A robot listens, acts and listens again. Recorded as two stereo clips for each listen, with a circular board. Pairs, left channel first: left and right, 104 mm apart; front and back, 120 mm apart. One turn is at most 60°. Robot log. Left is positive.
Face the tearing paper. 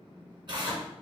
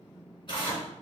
note: The tearing paper: 50° right.
cmd yaw -50
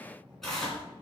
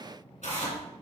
end: Facing the tearing paper.